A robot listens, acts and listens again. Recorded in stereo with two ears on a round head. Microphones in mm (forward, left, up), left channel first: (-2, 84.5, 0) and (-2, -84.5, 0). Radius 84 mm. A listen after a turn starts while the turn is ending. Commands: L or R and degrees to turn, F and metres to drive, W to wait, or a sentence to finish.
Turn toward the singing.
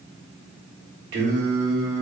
R55
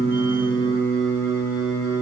L25
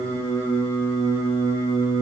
L25
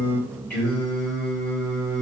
L10
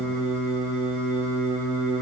Facing the singing, 2 to 4 m away.